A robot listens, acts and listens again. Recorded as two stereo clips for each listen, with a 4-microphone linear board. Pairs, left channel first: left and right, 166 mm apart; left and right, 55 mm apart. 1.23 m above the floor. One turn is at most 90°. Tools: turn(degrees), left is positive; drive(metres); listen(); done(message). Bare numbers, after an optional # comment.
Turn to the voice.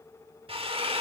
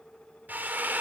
listen()
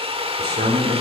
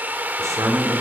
turn(-90)
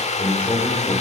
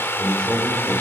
# So it is at 15° left.
turn(15)
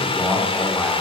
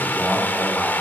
done("Facing the man speaking, 2 to 4 m away.")